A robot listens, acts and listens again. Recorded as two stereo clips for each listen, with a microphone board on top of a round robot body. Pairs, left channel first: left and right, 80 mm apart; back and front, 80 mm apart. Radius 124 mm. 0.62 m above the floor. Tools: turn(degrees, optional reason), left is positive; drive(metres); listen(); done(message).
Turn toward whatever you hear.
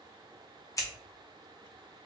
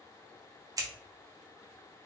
turn(degrees=45, reason="The scissors: 45° left.")
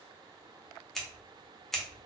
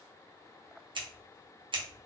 done("Facing the scissors, under 1 m away.")